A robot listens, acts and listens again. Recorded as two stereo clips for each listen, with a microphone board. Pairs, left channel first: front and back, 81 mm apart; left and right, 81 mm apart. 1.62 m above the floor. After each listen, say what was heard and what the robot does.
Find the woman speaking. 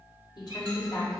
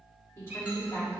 The woman speaking: 30° left. Turn 30° left.
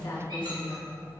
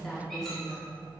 Found it: a woman speaking, straight ahead.